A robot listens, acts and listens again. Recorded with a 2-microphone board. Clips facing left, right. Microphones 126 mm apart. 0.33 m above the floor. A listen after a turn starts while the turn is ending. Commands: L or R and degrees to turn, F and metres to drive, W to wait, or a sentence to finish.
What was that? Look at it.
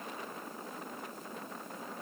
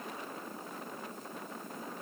W
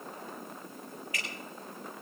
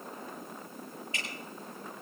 R30
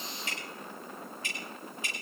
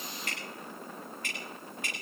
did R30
R125
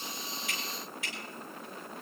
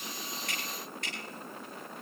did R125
Found it: dripping, straight ahead, over 4 m away.